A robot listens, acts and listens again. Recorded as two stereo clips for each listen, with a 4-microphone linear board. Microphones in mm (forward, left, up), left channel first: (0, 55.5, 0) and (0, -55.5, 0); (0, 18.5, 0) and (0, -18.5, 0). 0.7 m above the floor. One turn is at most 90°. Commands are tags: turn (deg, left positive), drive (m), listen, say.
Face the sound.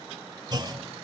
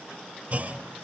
<turn deg="-40"/>
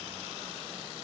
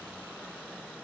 <listen/>
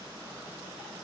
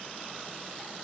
<say>I heard a clunk, but can't make it out now. It was about straight ahead or 100° right.</say>